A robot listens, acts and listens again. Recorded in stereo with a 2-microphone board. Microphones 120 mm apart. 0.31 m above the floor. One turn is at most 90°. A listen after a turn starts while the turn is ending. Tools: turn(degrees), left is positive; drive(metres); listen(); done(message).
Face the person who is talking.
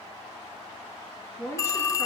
turn(degrees=25)
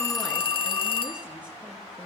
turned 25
listen()
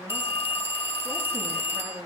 turn(degrees=-20)
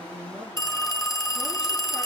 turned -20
listen()
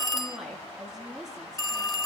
done("Facing the woman speaking, over 4 m away.")